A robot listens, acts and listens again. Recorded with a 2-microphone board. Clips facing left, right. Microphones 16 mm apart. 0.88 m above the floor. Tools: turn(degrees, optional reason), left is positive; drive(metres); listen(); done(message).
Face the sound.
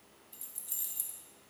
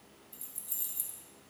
turn(degrees=30)
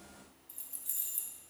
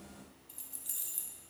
turn(degrees=-20, reason="So it is at 20° right.")
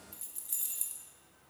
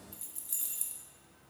done("Facing the keys jangling.")